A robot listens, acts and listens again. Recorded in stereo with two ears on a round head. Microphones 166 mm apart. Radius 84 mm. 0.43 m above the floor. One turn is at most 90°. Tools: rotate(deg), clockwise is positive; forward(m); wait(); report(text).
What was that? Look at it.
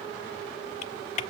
rotate(-40)
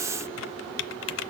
rotate(-90)
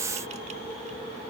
rotate(-10)
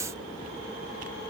wait()
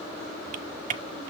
rotate(45)
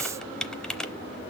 report("Facing the typing on a keyboard.")